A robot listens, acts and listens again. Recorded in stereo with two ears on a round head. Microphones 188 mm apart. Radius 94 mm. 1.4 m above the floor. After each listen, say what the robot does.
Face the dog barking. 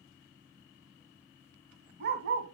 Turn 55° right.
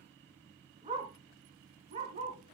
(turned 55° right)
Turn 35° right.
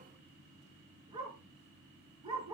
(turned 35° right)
Turn 25° right.
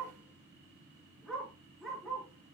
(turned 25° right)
Facing the dog barking, over 4 m away.